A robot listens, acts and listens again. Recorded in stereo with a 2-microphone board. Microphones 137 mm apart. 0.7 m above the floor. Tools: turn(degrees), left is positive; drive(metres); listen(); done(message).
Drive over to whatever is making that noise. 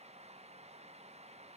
listen()
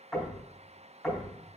turn(degrees=30)
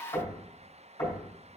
turn(degrees=155)
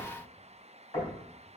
turn(degrees=35)
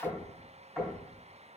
turn(degrees=15)
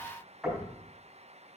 drive(metres=1.0)
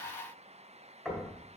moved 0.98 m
drive(metres=1.0)
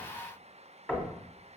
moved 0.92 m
turn(degrees=10)
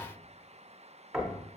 drive(metres=1.0)
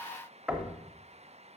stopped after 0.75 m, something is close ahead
done("Arrived at the knocking, straight ahead.")